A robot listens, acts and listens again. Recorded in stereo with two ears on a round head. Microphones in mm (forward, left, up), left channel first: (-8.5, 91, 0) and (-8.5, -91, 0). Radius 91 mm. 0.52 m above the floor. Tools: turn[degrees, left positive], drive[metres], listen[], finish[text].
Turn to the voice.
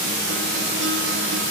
Action: listen[]
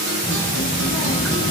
Thought: The child speaking: about 35° left or 145° left.
Action: turn[35]
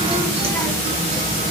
Thought: So it is at 15° left.
Action: turn[15]
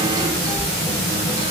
Thought: The child speaking is now 20° left.
Action: turn[20]
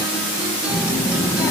Thought: The child speaking is now 15° left.
Action: turn[15]
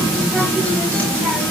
Action: finish[Facing the child speaking.]